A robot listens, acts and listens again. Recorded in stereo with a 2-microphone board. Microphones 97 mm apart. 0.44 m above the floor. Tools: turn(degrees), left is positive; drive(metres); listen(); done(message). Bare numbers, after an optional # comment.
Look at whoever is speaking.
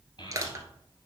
# The child speaking: about 50° left or 130° left.
turn(50)
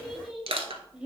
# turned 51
# So it is at 10° right.
turn(-10)
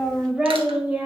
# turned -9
# The child speaking is now 15° right.
turn(-15)
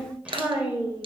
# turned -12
# The child speaking is now 25° right.
turn(-25)
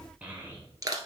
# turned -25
# The child speaking is now 20° right.
turn(-20)
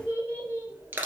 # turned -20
# The child speaking is now 25° right.
turn(-25)
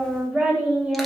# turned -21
# The child speaking is now 10° right.
turn(-10)
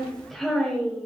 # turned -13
done("Found it: a child speaking, straight ahead, 1 to 2 m away.")